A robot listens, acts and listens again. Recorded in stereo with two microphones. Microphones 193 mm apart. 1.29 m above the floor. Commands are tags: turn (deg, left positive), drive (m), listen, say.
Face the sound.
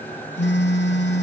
<turn deg="65"/>
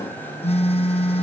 <turn deg="35"/>
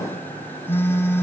<turn deg="10"/>
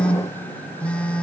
<say>Found it: a phone buzzing, straight ahead, under 1 m away.</say>